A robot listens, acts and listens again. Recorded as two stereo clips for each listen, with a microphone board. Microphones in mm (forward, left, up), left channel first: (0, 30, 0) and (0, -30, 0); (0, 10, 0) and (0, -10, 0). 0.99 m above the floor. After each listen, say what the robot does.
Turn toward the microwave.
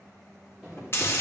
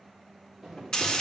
Turn 30° left.
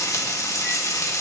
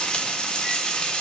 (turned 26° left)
Keep listening.
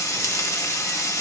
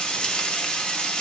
Keep listening.
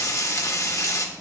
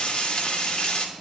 I heard a microwave, but can't make it out now. It was about 25° right or 155° left.